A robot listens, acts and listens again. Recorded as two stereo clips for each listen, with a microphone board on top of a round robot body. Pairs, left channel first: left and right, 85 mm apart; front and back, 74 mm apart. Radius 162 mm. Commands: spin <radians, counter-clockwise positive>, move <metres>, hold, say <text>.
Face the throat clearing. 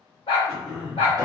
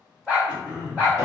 spin -3.05
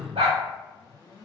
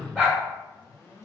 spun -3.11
say Facing the throat clearing, 1 to 2 m away.